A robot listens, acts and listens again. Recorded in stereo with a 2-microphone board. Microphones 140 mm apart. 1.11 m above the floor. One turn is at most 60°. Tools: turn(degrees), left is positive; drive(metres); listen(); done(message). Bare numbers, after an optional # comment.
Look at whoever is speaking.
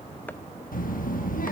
turn(60)
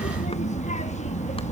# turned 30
# So it is at 55° left.
turn(55)
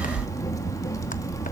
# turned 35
# The child speaking is now 25° left.
turn(25)
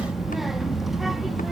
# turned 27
done("Facing the child speaking, 1 to 2 m away.")